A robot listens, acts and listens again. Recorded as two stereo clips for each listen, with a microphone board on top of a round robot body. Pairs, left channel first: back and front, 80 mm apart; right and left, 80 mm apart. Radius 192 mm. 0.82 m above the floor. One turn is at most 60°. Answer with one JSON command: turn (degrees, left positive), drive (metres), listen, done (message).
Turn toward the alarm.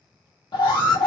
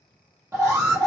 {"turn": 60}
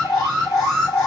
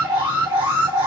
{"turn": 60}
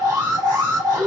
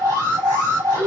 {"turn": 40}
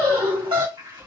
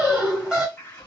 {"turn": 10}
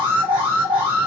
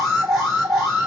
{"done": "Facing the alarm."}